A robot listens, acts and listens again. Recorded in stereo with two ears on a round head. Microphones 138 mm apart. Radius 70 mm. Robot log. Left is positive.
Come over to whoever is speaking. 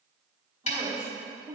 note: The woman speaking: about 25° right or 155° right.
cmd yaw -25
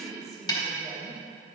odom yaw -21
cmd fwd 1.0
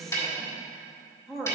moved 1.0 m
cmd fwd 1.0
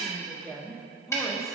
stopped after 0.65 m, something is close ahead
end: I am next to the woman speaking.